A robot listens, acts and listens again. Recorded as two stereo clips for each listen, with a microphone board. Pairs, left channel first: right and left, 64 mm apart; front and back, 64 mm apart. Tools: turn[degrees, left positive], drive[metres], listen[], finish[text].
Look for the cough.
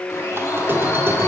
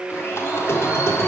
Action: listen[]
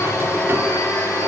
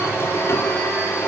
Action: listen[]
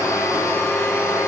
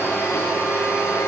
Action: finish[I can't make out a cough to turn to.]